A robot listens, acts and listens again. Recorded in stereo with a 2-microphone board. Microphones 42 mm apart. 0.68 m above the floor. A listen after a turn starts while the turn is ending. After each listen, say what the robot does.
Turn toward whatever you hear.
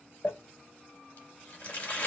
Turn 55° left.
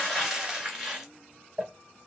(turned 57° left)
Found it: crumpling, straight ahead.